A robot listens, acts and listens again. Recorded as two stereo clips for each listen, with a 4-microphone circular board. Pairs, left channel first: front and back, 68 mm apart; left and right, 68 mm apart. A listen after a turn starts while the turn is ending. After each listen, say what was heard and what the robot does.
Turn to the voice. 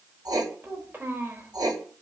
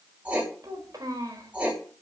The child speaking: 120° right. Turn 120° right.
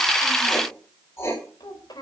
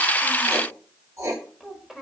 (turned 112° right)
Found it: a child speaking, straight ahead, over 4 m away.